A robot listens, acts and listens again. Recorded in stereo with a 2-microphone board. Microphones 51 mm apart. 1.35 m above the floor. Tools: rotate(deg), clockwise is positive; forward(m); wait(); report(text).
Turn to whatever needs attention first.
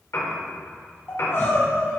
rotate(-50)
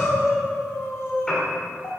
rotate(-75)
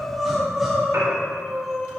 report("Facing the crying, 2 to 4 m away.")